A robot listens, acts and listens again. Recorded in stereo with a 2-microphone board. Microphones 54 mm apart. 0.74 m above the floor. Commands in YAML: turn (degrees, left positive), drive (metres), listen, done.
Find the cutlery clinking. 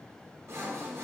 listen: true
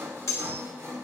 turn: 65
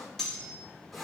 turn: 10
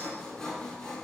listen: true
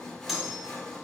done: "Found it: cutlery clinking, straight ahead."